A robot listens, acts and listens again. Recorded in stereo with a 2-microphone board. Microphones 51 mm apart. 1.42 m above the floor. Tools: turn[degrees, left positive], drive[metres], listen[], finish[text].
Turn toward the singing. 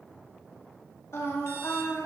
Thought: The singing: about 60° left or 120° left.
Action: turn[60]
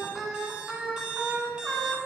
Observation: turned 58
Thought: So it is at 15° right.
Action: turn[-15]
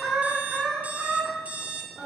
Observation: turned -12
Thought: The singing is now 15° right.
Action: turn[-15]
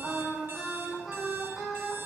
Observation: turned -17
Action: finish[Facing the singing.]